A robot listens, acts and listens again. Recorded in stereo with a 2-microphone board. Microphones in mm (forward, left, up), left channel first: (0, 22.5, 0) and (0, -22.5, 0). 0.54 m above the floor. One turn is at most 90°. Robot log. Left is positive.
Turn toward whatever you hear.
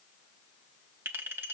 note: The clink: about 60° right or 120° right.
cmd yaw -60
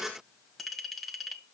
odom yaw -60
end: Facing the clink.